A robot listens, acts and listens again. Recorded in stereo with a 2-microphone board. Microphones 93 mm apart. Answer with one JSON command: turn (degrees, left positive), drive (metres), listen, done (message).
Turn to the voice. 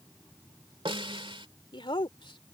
{"turn": 65}
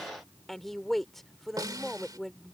{"done": "Found it: a woman speaking, straight ahead."}